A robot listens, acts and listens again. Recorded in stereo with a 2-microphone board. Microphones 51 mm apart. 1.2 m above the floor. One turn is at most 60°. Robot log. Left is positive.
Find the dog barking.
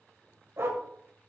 note: The dog barking: about 60° right or 120° right.
cmd yaw -60
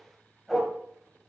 end: Found it: a dog barking, straight ahead, 2 to 4 m away.